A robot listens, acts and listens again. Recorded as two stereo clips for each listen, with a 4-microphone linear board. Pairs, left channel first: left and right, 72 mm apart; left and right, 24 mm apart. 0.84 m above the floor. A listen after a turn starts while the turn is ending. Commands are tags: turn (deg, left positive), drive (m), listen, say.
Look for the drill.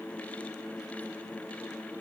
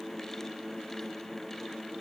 <listen/>
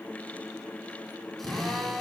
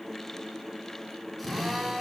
<turn deg="30"/>
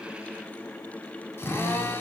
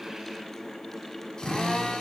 <turn deg="150"/>
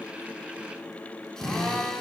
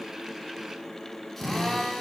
<turn deg="10"/>
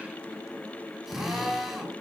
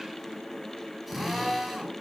<say>Found it: a drill, straight ahead.</say>